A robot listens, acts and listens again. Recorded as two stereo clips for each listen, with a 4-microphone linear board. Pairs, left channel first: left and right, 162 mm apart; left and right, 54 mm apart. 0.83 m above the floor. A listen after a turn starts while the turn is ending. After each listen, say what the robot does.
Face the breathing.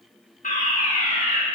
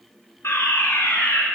Keep listening.
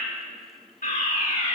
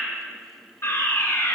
Keep listening.
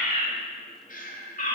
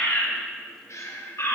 Turn 65° left.
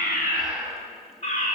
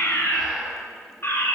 Facing the breathing.